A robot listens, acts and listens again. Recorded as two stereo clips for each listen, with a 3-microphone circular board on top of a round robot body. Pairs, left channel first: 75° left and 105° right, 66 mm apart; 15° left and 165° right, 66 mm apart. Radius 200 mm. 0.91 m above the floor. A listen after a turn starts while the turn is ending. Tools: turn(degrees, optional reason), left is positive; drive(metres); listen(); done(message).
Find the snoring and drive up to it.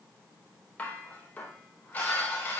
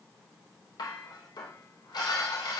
listen()
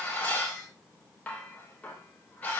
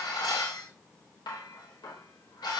listen()
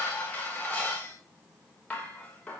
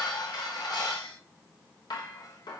done("I can't make out snoring, only dishes clattering.")